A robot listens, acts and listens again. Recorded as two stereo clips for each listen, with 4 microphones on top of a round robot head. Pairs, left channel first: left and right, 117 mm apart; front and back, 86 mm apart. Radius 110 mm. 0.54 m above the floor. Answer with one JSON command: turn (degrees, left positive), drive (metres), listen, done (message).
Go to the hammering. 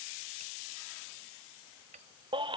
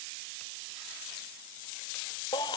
{"listen": true}
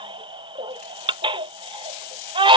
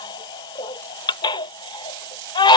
{"listen": true}
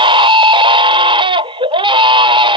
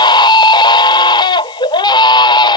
{"done": "I can't make out hammering to turn to."}